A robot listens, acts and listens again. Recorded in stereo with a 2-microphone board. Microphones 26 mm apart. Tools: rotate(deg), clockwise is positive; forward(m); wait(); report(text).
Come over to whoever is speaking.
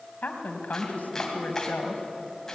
rotate(-75)
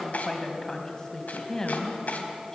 rotate(-25)
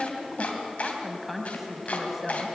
forward(1.0)
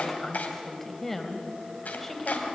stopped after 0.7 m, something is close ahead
rotate(-10)
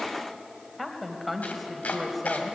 report("Something is in my way. I am facing the woman speaking but have not reached it.")